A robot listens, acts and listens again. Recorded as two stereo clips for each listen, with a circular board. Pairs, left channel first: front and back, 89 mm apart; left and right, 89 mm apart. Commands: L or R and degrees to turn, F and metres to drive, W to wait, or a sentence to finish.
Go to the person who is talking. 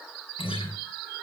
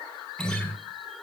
W
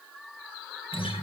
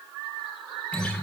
W
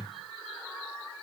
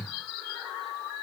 I can't make out anyone speaking to turn to.